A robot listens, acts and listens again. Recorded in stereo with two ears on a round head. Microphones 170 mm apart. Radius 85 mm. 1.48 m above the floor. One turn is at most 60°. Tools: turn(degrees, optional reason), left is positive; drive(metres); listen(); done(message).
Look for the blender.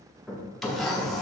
turn(degrees=30)
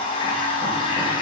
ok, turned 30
turn(degrees=60, reason="So it is at 150° left.")
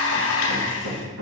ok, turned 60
turn(degrees=60, reason="The blender is now 95° left.")
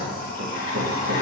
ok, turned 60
turn(degrees=50, reason="The blender is now 50° left.")
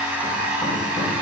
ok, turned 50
turn(degrees=-10, reason="The blender is now 10° right.")
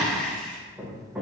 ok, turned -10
done("Facing the blender, 1 to 2 m away.")